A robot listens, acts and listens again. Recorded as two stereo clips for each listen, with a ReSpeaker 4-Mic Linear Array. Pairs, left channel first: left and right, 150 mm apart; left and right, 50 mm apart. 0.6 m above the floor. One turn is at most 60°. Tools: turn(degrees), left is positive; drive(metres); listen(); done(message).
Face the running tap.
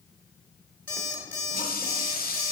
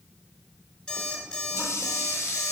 turn(degrees=60)
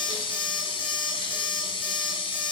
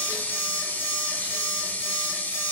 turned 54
turn(degrees=35)
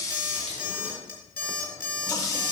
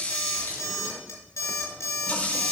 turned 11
turn(degrees=20)
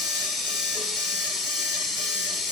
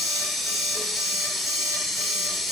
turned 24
done("Facing the running tap.")